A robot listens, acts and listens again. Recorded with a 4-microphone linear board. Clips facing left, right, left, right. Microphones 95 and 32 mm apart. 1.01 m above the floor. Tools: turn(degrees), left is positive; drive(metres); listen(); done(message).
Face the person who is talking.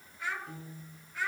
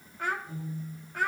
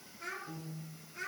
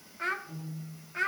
turn(degrees=-50)
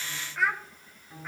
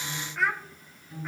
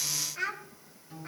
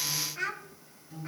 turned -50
done("Found it: a child speaking, straight ahead, 1 to 2 m away.")